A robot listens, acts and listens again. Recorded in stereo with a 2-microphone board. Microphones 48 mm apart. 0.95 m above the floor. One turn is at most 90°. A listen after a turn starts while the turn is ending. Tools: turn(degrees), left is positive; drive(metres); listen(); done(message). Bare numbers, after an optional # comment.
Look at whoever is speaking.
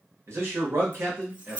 # The man speaking: about 65° right or 115° right.
turn(-65)
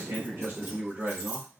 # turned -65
# So it is at 45° right.
turn(-45)
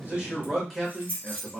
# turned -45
done("Facing the man speaking.")